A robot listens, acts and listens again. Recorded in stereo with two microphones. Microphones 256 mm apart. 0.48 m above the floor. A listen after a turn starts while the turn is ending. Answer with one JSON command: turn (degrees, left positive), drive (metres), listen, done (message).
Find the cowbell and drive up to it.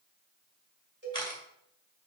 {"turn": -40}
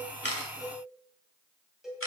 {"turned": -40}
{"drive": 1.0}
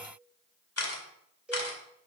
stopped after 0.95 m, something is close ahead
{"done": "I am next to the cowbell."}